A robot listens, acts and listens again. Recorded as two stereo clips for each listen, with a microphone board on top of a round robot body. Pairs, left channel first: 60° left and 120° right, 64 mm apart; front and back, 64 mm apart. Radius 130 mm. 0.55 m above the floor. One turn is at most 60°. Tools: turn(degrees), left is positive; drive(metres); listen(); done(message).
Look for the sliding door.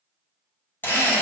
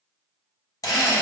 listen()
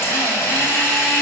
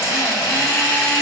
listen()
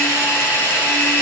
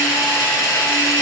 done("I can't make out a sliding door, only a drill.")